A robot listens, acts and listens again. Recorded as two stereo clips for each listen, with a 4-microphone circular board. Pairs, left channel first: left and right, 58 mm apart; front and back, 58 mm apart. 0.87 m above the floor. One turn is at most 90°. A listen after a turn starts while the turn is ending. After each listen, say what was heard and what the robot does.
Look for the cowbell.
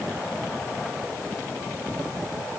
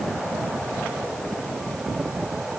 Keep listening.
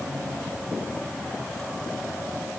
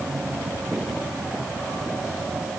Keep listening.
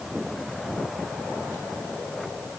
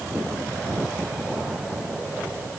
I can't make out a cowbell to turn to.